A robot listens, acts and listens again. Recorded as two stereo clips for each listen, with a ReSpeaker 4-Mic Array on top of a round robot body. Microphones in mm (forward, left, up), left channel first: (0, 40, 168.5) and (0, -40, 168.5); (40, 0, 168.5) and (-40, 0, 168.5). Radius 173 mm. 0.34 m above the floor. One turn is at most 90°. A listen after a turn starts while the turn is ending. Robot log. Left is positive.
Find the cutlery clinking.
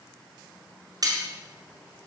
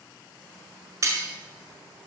note: The cutlery clinking: 130° right.
cmd yaw -90
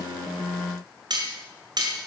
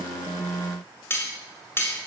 note: The cutlery clinking is now 60° right.
cmd yaw -60
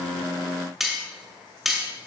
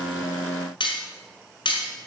end: Found it: cutlery clinking, straight ahead.